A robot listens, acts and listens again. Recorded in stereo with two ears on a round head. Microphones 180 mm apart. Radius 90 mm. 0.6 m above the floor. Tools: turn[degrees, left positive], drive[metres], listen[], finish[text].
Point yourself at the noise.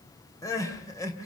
Thought: The crying: about 15° left or 165° left.
Action: turn[15]
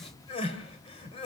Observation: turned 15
Thought: So it is at 150° left.
Action: turn[150]
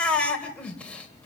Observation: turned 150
Action: finish[Found it: crying, straight ahead, 2 to 4 m away.]